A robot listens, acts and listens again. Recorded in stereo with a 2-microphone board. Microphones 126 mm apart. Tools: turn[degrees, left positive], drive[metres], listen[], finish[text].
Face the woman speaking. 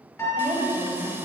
Thought: The woman speaking: about 15° left or 165° left.
Action: turn[15]
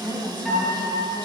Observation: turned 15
Thought: The woman speaking: about 40° left or 140° left.
Action: turn[40]
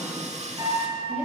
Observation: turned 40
Thought: So it is at 105° left.
Action: turn[105]
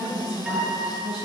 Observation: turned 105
Thought: The woman speaking is now 55° right.
Action: turn[-55]
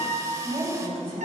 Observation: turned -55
Action: finish[Facing the woman speaking.]